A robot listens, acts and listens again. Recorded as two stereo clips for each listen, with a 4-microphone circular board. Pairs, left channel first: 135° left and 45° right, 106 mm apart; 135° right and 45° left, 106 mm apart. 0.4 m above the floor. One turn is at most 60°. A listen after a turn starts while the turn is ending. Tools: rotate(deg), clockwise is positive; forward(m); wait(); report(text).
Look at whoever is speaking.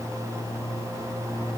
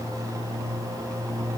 wait()
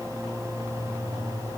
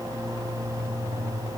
wait()
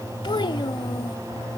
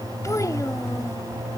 rotate(-60)
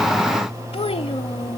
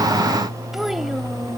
rotate(-60)
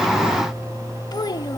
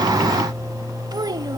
rotate(-60)
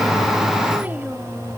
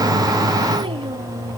rotate(-30)
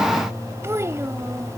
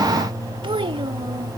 rotate(-15)
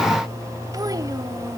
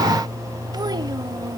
wait()
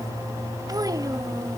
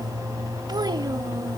report("Facing the child speaking.")